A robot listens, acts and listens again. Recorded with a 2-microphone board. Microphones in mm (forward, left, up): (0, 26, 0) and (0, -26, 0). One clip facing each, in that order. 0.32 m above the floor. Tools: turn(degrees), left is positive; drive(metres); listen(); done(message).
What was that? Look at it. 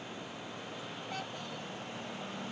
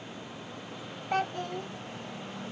turn(degrees=-55)
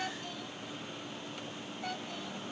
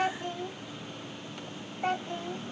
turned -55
turn(degrees=-50)
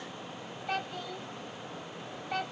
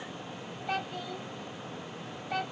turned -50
done("Facing the child speaking.")